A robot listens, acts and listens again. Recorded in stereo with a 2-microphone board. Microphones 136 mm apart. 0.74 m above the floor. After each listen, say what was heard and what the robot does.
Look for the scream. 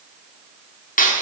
Keep listening.
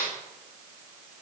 Keep listening.
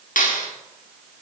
I can't make out a scream to turn to.